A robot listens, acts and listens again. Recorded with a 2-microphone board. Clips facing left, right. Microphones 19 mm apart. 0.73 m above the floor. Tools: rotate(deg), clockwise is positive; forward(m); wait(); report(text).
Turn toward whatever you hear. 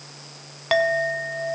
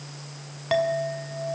rotate(-25)
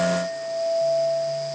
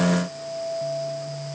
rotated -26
rotate(-130)
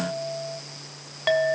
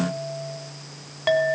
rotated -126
report("Facing the clink, 2 to 4 m away.")